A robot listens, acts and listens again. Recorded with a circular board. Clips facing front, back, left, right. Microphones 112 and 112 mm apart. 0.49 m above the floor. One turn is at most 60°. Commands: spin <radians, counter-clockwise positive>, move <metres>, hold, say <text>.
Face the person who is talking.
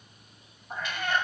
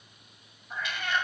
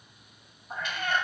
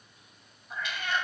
hold
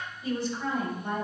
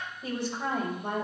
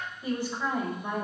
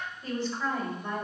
spin 1.05
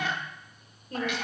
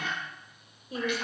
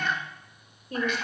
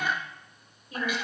spin 1.05
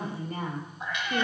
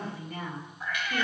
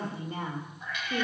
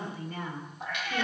spin 0.61
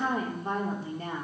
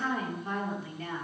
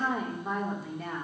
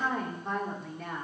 say Found it: a woman speaking, straight ahead, 1 to 2 m away.